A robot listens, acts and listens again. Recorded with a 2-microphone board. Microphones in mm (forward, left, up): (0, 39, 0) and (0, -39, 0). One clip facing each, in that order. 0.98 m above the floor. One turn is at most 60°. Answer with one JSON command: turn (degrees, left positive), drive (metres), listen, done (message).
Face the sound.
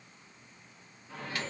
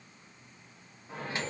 {"turn": -25}
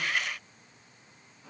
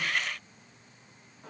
{"turn": -60}
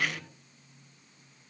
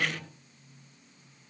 {"turn": -60}
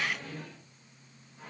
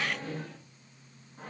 {"turn": -40}
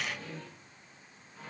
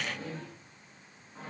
{"turn": -35}
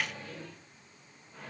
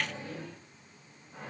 {"turn": -20}
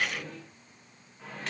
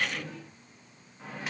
{"done": "Found it: a microwave, straight ahead."}